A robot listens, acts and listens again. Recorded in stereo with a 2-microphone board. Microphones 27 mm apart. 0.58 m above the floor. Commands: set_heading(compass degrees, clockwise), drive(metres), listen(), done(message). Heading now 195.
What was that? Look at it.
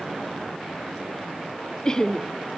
set_heading(180)
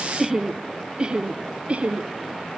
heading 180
set_heading(230)
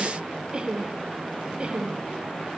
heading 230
set_heading(270)
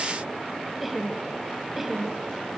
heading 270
set_heading(280)
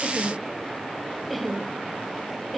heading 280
done("Facing the laughter, 2 to 4 m away.")